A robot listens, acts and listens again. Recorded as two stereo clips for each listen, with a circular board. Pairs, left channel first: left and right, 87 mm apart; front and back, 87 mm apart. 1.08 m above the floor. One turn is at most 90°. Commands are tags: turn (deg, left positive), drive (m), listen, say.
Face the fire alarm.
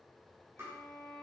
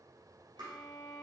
<listen/>
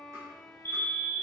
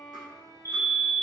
<turn deg="90"/>
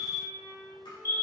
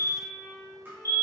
<turn deg="50"/>
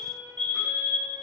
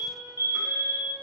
<turn deg="25"/>
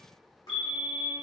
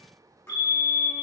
<say>Facing the fire alarm, 2 to 4 m away.</say>